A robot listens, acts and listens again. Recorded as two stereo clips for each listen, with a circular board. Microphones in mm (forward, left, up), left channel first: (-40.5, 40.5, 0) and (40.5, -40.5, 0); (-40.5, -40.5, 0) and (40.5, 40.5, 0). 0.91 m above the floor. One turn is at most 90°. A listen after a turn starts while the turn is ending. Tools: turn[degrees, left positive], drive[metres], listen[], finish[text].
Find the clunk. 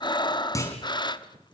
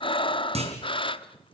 Thought: The clunk: 70° left.
Action: turn[70]
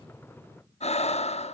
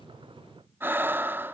Action: finish[Facing where the clunk came from. I can't hear it now.]